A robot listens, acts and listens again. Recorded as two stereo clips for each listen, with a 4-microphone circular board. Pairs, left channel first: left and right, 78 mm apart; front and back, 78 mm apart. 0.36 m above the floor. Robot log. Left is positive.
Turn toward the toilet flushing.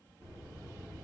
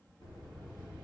cmd idle
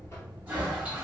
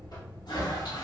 note: The toilet flushing: 20° right.
cmd yaw -20
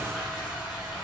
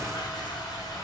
note: The toilet flushing is now 10° right.
cmd yaw -10
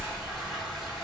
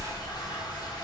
end: Facing the toilet flushing, 1 to 2 m away.